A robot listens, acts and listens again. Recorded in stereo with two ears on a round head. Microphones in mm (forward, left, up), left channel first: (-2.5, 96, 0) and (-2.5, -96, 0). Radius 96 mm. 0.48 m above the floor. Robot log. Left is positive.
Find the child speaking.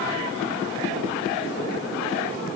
cmd idle
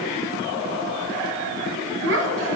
note: The child speaking: about 60° right or 120° right.
cmd yaw -60
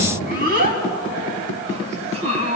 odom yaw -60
note: So it is at 30° right.
cmd yaw -30
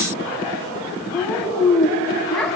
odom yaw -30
end: Found it: a child speaking, straight ahead, 2 to 4 m away.